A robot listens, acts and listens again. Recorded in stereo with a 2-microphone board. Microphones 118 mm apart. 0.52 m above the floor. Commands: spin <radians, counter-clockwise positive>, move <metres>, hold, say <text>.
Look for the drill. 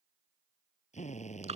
spin 1.57
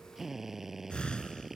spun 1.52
say Facing the drill.